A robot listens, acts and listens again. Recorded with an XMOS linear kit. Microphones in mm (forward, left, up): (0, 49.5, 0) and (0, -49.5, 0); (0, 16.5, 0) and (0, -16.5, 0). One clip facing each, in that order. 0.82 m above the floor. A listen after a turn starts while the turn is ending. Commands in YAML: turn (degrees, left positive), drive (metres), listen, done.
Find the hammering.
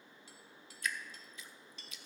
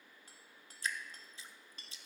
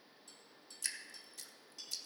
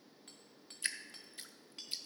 turn: -45
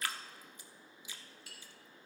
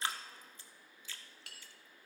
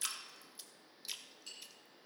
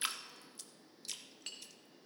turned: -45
turn: -85
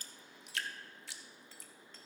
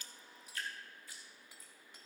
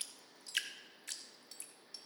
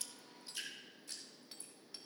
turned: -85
listen: true
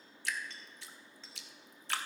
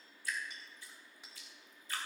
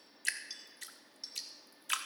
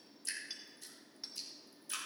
turn: -15
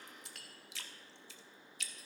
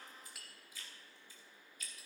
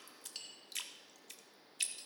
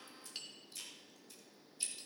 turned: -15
done: "Found it: hammering, straight ahead, 2 to 4 m away."